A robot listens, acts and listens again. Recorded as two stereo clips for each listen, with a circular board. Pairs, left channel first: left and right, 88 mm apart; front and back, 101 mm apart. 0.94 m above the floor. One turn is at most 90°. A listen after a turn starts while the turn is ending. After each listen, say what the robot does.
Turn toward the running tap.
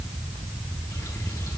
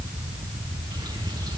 Keep listening.
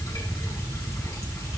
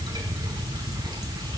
Keep listening.
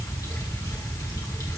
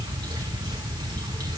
I can't make out a running tap.